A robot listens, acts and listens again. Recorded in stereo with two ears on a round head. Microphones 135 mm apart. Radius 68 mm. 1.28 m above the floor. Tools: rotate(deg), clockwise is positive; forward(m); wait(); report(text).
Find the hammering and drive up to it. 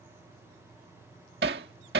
rotate(90)
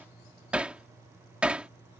rotate(10)
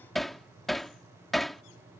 forward(1.0)
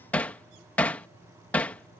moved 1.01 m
rotate(-10)
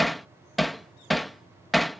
forward(1.0)
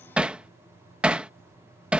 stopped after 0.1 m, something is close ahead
rotate(10)
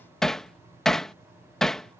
report("Arrived at the hammering, straight ahead.")